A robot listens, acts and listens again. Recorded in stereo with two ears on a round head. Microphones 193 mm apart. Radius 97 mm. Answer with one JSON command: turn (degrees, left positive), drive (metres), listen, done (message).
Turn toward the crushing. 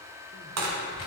{"turn": -90}
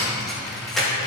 {"done": "Facing the crushing, 1 to 2 m away."}